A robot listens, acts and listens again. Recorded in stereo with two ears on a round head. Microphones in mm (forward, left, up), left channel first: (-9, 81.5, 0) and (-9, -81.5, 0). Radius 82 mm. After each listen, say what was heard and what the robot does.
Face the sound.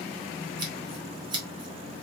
The scissors: about 25° right or 155° right. Turn 25° right.
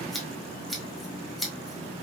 Found it: scissors, straight ahead, 1 to 2 m away.